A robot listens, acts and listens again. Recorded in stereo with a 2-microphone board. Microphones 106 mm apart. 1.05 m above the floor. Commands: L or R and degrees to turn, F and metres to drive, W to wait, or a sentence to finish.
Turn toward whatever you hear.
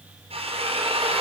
R70
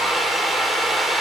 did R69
Found it: a drill, straight ahead.